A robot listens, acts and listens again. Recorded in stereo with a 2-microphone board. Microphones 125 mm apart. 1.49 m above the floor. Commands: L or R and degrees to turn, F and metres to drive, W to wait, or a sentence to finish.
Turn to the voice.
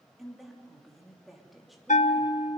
L30
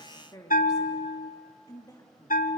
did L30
L150
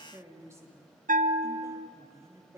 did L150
R20
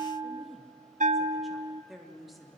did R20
Facing the woman speaking.